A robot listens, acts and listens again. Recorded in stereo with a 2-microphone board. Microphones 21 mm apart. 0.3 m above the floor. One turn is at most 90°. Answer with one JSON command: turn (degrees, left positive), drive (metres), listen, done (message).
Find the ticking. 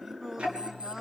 {"turn": -60}
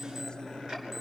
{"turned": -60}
{"turn": -55}
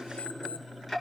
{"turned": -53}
{"done": "Found it: ticking, straight ahead."}